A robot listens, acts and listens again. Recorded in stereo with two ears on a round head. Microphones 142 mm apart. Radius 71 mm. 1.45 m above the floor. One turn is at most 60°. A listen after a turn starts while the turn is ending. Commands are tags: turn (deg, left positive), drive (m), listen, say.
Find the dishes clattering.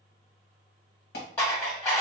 <turn deg="15"/>
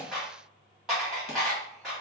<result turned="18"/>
<say>Found it: dishes clattering, straight ahead, 1 to 2 m away.</say>